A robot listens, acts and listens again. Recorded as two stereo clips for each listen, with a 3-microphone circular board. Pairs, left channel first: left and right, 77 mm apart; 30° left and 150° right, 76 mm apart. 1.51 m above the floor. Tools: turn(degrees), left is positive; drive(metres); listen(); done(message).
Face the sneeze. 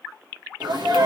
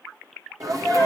turn(degrees=-110)
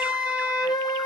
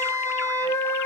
done("I heard a sneeze from this way, but can't make it out now.")